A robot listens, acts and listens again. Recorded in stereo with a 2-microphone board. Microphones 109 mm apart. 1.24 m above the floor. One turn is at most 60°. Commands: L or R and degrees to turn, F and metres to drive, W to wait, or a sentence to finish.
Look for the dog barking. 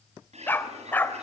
L15
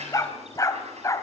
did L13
L30
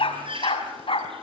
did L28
L60
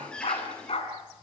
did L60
L60
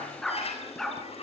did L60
Found it: a dog barking, straight ahead.